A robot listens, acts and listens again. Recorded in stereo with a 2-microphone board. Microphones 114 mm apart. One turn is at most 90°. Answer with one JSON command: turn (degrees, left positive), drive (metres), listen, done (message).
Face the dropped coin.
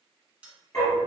{"turn": -30}
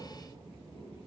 {"listen": true}
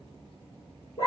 {"done": "I heard a dropped coin, but can't make it out now. It was about 15° left or 135° right."}